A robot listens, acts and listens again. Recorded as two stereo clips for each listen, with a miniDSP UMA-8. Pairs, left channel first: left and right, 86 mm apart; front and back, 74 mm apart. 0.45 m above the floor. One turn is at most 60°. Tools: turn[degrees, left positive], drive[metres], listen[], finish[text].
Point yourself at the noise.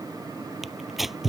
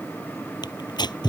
Action: finish[Found it: tearing paper, straight ahead.]